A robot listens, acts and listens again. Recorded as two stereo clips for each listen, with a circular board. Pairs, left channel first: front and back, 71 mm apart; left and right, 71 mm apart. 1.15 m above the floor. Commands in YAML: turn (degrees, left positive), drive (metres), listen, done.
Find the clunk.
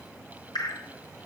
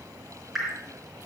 listen: true
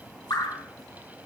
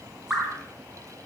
listen: true
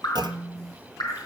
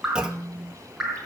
turn: -170
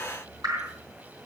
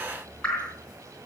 done: "I heard a clunk from this way, but can't make it out now."